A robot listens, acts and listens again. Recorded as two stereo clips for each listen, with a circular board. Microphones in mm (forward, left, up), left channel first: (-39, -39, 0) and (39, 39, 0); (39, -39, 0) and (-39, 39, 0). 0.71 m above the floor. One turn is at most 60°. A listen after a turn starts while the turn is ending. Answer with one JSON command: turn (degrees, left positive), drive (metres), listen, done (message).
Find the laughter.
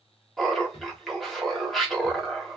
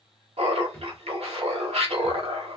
{"turn": 60}
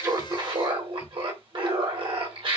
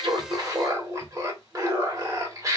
{"turn": 60}
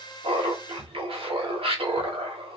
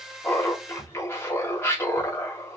{"turn": 20}
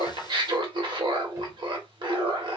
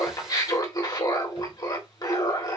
{"done": "Found it: laughter, straight ahead, 1 to 2 m away."}